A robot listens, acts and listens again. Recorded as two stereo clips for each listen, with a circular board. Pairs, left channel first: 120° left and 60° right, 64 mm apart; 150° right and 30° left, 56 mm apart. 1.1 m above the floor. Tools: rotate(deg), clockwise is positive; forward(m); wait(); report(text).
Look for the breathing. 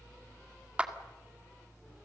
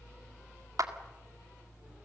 wait()
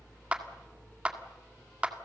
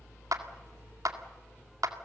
wait()
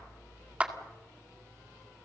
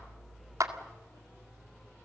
report("I can't make out breathing, only a clap.")